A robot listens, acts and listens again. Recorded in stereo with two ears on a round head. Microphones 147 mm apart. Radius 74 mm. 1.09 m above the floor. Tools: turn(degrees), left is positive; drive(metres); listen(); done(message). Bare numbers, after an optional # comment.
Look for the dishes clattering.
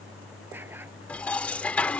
turn(30)
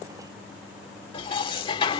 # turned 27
# So it is at 145° left.
turn(145)
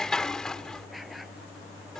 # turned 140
done("Found it: dishes clattering, straight ahead.")